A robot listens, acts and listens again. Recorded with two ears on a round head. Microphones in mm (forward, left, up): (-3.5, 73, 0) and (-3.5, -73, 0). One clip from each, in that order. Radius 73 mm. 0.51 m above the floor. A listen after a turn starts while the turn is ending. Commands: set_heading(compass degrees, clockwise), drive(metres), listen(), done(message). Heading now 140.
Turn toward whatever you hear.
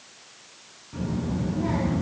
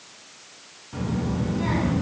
set_heading(230)
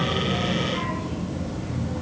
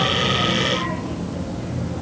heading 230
set_heading(240)
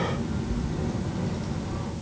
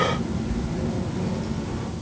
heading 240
done("Facing the child speaking, over 4 m away.")